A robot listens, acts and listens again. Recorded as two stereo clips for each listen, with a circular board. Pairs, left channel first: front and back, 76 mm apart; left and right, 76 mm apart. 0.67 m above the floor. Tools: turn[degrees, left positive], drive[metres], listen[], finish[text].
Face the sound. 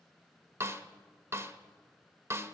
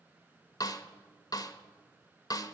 Thought: The snare drum: 125° left.
Action: turn[125]
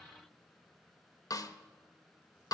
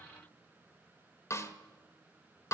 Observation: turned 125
Thought: The snare drum is now 35° left.
Action: turn[35]
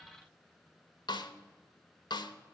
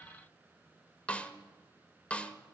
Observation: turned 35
Thought: The snare drum is now 15° left.
Action: turn[15]
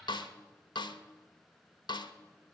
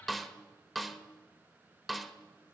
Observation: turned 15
Action: finish[Found it: a snare drum, straight ahead.]